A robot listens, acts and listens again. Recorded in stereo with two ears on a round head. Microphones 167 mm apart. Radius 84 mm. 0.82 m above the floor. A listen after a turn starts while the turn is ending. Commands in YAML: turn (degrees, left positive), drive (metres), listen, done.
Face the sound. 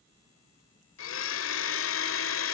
turn: 75
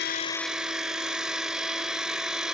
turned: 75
done: "Found it: a blender, straight ahead."